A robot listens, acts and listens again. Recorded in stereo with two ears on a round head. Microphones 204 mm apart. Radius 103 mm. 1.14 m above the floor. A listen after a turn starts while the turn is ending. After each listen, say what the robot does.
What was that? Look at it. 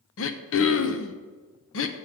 Turn 60° left.
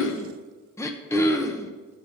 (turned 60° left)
Turn 15° left.
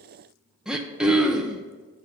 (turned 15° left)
Facing the throat clearing, under 1 m away.